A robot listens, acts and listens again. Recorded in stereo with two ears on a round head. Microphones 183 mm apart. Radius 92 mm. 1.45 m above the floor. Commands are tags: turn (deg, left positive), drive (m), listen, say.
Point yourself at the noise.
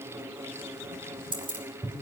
<turn deg="-25"/>
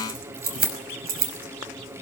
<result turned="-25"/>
<turn deg="-130"/>
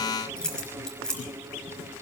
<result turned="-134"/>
<say>Facing the keys jangling, over 4 m away.</say>